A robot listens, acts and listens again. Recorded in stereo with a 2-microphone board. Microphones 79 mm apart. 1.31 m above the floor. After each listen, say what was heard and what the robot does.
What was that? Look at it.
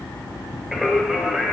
Turn 30° right.
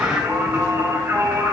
So it is at 150° right. Turn 150° right.
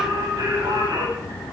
The singing is now 60° right. Turn 60° right.
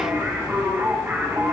The singing is now 30° right. Turn 30° right.
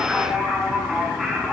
Facing the singing, over 4 m away.